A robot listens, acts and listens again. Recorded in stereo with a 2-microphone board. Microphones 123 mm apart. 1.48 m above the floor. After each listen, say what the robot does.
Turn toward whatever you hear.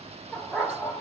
Turn 30° left.
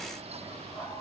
Keep listening.
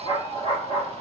Turn 125° left.
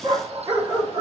Turn 35° right.
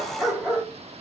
Facing the dog barking, 2 to 4 m away.